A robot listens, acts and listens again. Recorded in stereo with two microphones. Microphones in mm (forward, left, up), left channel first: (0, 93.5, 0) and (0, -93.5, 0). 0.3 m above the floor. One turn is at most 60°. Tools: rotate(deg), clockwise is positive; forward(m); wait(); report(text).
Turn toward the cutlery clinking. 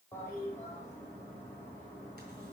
wait()
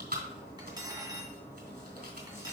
rotate(20)
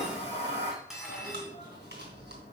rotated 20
report("Found it: cutlery clinking, straight ahead.")